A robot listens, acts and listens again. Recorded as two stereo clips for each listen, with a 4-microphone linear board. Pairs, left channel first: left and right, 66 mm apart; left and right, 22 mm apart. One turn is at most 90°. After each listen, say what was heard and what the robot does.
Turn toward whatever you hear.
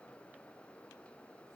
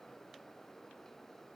Keep listening.
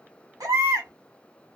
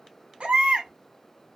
The baby crying: about 65° right or 115° right. Turn 65° right.
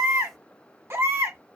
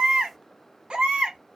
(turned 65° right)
So it is at 45° right. Turn 45° right.
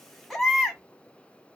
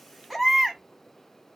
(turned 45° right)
Facing the baby crying.